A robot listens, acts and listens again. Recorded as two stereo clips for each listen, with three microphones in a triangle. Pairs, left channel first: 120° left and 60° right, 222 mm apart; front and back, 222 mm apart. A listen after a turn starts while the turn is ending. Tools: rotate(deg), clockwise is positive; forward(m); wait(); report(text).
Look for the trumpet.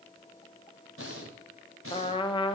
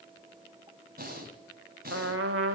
rotate(175)
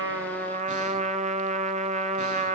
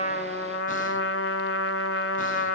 report("Found it: a trumpet, straight ahead, 1 to 2 m away.")